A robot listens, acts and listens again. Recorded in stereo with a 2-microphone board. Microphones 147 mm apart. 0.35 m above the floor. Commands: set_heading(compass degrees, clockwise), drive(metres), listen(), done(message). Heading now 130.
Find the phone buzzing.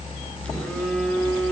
set_heading(100)
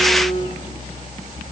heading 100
set_heading(320)
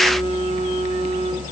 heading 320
set_heading(280)
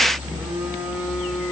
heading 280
set_heading(290)
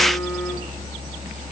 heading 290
listen()
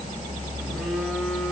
listen()
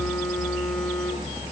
done("Facing where the phone buzzing came from. I can't hear it now.")